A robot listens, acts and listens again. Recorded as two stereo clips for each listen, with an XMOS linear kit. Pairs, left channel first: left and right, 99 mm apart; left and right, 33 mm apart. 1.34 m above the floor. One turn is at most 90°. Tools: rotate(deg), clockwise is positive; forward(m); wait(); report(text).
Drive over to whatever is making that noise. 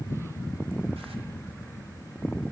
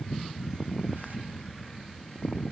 wait()
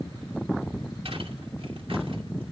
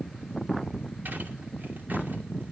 wait()
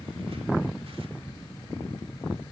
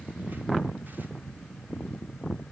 report("I can't make out anything to turn to.")